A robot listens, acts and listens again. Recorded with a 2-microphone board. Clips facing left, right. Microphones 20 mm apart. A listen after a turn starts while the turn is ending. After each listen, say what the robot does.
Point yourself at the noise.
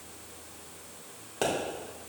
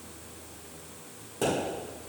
Turn 30° left.
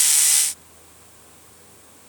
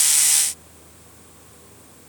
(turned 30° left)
Keep listening.
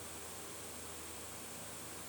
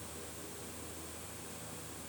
I heard a pop, but can't make it out now. It was about straight ahead or 120° left.